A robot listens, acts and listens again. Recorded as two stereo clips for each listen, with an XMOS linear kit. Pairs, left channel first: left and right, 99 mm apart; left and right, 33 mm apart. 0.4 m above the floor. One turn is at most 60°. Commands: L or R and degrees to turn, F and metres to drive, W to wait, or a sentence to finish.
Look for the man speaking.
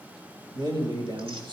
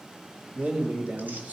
R55
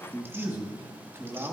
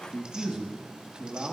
R30
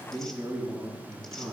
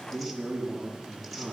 R10
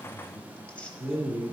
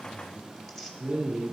R10
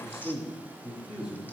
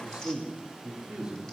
Facing the man speaking, over 4 m away.